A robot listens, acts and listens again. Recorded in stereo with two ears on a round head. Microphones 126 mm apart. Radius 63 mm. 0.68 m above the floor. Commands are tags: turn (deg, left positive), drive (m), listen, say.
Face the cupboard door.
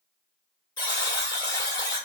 <listen/>
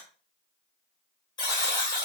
<listen/>
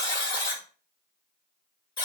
<say>I can't make out a cupboard door, only a buzzer.</say>